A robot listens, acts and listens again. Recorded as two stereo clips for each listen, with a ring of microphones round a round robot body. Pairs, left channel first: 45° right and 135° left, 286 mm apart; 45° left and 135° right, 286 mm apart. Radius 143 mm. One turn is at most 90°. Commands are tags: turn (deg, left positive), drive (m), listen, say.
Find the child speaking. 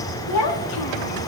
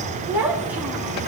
<turn deg="-50"/>
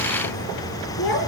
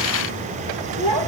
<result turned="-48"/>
<turn deg="10"/>
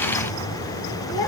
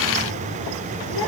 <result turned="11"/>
<listen/>
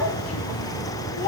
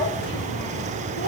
<listen/>
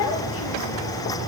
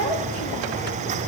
<say>I heard a child speaking from this way, but can't make it out now.</say>